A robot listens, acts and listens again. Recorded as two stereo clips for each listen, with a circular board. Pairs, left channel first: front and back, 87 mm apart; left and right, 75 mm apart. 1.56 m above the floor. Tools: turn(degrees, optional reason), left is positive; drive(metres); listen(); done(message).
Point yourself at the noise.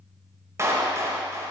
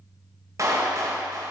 turn(degrees=-125, reason="The clap: 125° right.")
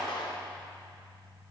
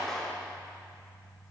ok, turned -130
done("Facing the clap, 1 to 2 m away.")